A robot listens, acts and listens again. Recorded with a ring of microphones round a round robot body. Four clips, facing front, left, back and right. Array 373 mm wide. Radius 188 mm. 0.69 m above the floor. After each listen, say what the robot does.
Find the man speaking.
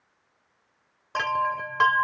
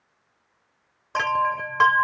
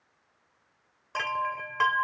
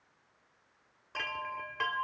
Keep listening.
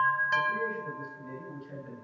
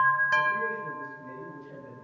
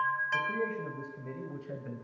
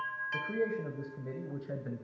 Turn 125° right.
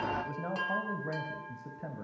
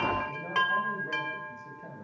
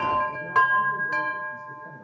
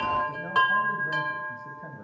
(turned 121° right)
Turn 15° right.
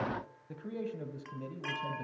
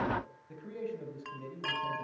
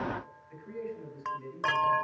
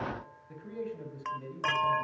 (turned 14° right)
Facing the man speaking, over 4 m away.